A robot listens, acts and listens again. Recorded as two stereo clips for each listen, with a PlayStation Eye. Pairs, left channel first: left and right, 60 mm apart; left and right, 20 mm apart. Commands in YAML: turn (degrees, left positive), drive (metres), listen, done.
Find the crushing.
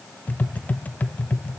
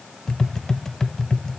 listen: true
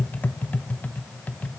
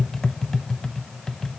listen: true
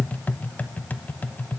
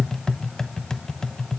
done: "I can't make out crushing, only tapping."